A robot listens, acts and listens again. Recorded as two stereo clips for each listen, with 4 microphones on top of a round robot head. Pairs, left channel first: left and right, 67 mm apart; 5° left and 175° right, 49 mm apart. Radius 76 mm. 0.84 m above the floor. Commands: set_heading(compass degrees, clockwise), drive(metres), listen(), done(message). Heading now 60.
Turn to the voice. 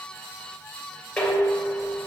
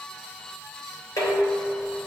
listen()
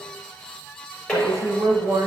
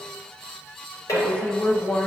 set_heading(120)
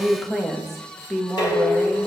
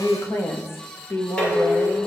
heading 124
done("Facing the woman speaking.")